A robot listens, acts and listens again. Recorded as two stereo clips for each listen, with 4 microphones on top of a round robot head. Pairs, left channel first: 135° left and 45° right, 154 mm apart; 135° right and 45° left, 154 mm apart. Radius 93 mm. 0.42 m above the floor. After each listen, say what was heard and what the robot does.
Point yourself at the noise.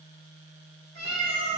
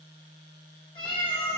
The cat meowing: 80° right. Turn 80° right.
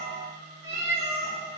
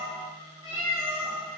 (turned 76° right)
The cat meowing is now 25° right. Turn 25° right.
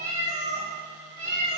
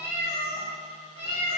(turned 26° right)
The cat meowing is now 10° right. Turn 10° right.
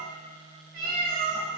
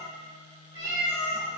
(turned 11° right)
The cat meowing is now 10° right. Turn 10° right.
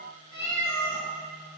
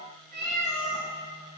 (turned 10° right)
Facing the cat meowing.